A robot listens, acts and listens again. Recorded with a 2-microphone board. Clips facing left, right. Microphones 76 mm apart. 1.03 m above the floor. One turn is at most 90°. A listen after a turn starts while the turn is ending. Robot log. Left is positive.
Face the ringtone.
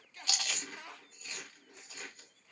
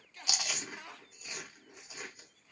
cmd idle
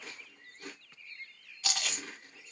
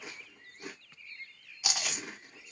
cmd idle
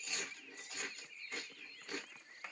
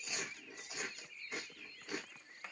end: I can't make out a ringtone to turn to.